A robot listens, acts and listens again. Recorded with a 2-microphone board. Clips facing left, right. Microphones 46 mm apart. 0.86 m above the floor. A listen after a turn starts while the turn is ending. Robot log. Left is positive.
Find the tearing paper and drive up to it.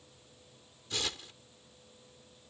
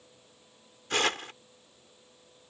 note: The tearing paper: about 60° right or 120° right.
cmd yaw -60
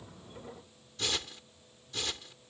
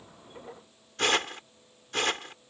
note: So it is at 55° right.
cmd yaw -55
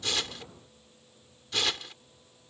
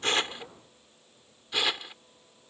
note: The tearing paper is now 15° right.
cmd yaw -15
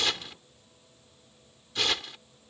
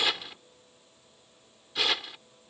cmd fwd 1.0
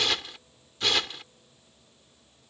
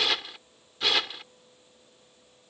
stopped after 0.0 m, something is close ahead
end: Something is in my way. I am facing the tearing paper but have not reached it.